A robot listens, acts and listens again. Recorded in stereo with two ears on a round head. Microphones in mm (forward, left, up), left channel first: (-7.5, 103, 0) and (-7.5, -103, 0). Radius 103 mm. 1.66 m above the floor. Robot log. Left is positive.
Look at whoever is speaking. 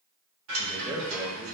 cmd yaw -30
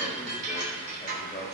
note: So it is at 25° left.
cmd yaw +25
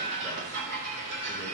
cmd idle
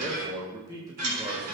note: The man speaking is now 15° right.
cmd yaw -15
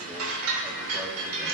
cmd idle
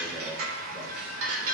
cmd idle
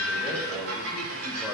end: Facing the man speaking.